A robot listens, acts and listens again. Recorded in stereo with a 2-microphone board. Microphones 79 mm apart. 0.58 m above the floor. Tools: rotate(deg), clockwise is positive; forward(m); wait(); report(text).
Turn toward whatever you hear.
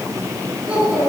rotate(30)
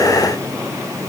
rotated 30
wait()
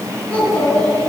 rotate(-15)
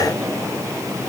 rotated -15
wait()
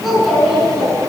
report("Found it: a child speaking, straight ahead, over 4 m away.")